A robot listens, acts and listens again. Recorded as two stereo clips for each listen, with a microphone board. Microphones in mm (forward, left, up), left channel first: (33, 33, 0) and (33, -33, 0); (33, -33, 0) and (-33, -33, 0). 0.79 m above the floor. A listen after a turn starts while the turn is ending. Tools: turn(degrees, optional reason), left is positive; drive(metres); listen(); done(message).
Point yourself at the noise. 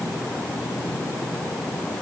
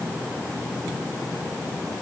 listen()
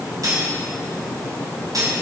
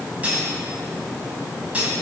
turn(degrees=-110, reason="The cutlery clinking: 110° right.")
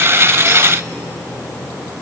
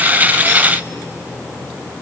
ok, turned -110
listen()
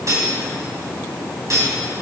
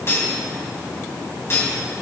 turn(degrees=-50, reason="The cutlery clinking is now 50° right.")
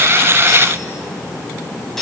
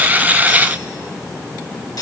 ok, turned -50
done("Facing the cutlery clinking, 2 to 4 m away.")